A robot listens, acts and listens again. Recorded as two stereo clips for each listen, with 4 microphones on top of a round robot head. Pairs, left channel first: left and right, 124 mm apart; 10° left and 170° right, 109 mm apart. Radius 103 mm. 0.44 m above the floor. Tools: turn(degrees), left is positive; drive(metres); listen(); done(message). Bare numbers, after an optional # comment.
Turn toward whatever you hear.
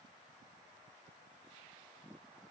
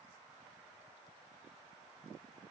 listen()
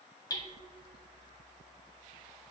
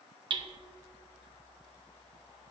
# The hammering: 150° left.
turn(150)
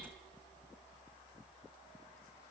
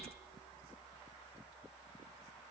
listen()
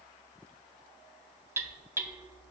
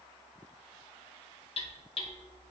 # The hammering is now 20° right.
turn(-20)
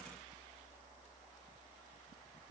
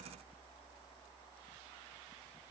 listen()
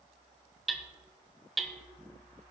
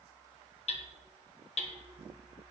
done("Found it: hammering, straight ahead, 1 to 2 m away.")